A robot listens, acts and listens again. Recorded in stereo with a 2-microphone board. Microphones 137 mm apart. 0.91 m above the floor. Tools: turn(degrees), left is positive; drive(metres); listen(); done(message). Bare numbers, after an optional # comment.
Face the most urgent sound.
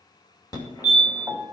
# The fire alarm: about 30° left or 150° left.
turn(30)
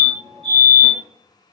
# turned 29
# So it is at 115° left.
turn(115)
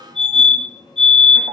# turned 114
done("Facing the fire alarm, 2 to 4 m away.")